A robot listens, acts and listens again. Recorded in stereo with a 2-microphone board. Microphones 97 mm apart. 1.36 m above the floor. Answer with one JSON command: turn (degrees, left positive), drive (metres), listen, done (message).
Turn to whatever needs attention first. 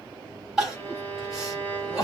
{"turn": -30}
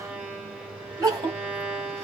{"turn": -140}
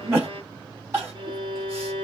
{"turn": -30}
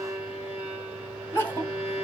{"turn": 20}
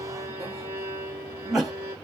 {"done": "Facing the crying, 2 to 4 m away."}